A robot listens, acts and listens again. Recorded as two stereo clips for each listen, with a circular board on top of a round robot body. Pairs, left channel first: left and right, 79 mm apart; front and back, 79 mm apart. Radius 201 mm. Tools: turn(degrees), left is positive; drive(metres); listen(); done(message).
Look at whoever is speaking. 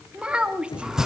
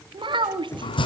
turn(degrees=-170)
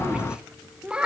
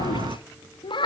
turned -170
turn(degrees=-10)
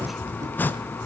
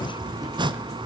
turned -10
listen()
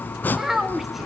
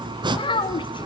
done("Facing the child speaking.")